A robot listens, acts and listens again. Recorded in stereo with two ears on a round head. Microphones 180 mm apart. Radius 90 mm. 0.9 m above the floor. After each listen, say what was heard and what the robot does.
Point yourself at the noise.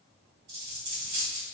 The dropped coin: about 60° right or 120° right. Turn 60° right.
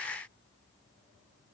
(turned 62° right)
Keep listening.
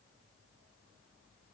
I heard a dropped coin, but can't make it out now. It was about straight ahead or 55° right.